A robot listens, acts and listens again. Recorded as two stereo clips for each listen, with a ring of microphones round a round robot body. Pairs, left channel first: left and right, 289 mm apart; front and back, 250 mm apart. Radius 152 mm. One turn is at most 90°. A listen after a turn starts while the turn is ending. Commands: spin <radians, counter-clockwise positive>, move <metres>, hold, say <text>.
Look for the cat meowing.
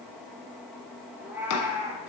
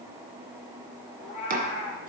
spin -0.17
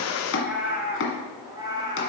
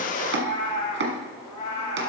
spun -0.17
spin -0.26
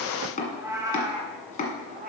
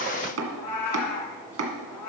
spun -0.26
spin -0.52
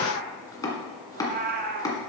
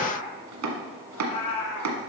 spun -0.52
spin -0.52
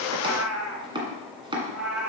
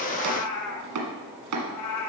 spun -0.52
say Found it: a cat meowing, straight ahead, 1 to 2 m away.